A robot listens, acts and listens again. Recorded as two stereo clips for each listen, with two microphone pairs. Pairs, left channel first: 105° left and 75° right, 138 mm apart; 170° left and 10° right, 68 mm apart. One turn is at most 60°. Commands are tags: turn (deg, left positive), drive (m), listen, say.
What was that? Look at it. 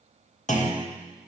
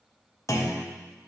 <turn deg="60"/>
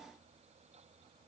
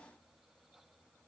<turn deg="60"/>
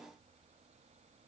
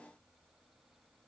<turn deg="10"/>
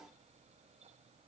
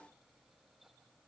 <say>I heard a clunk from this way, but can't make it out now.</say>